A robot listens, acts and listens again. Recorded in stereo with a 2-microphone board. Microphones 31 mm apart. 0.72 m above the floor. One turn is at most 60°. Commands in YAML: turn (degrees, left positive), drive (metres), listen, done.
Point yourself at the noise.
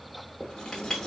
turn: 20
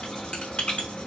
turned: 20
turn: 60
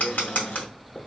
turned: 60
turn: 60
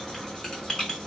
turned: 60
turn: 20
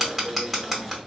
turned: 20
done: "Found it: writing, straight ahead, under 1 m away."